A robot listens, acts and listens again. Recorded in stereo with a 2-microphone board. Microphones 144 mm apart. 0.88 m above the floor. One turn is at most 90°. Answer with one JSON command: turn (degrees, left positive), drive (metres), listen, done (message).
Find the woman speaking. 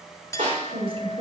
{"turn": -45}
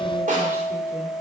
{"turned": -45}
{"listen": true}
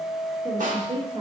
{"turn": -40}
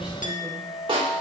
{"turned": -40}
{"listen": true}
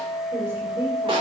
{"turn": -20}
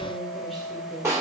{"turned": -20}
{"listen": true}
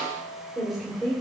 {"done": "Found it: a woman speaking, straight ahead, 2 to 4 m away."}